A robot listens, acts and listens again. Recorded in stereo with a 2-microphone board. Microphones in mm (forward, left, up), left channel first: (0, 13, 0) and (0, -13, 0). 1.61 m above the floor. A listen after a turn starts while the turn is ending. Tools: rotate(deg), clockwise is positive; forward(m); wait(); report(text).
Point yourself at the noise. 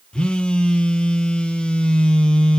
rotate(-40)
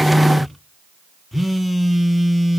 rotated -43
report("Found it: a phone buzzing, straight ahead.")